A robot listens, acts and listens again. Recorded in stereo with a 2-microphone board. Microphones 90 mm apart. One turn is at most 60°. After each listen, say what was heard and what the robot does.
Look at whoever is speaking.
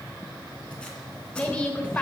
Turn 30° left.
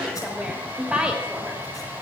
So it is at 15° right. Turn 15° right.
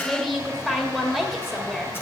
Facing the woman speaking.